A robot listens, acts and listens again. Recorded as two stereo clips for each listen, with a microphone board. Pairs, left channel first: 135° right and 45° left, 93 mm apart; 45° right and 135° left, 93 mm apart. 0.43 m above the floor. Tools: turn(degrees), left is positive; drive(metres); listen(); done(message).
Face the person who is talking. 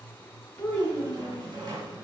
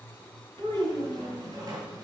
turn(degrees=145)
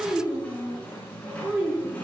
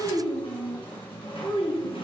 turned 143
turn(degrees=-30)
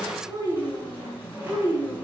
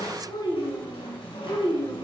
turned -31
turn(degrees=-15)
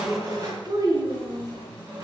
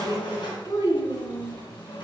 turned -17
done("Facing the child speaking, 2 to 4 m away.")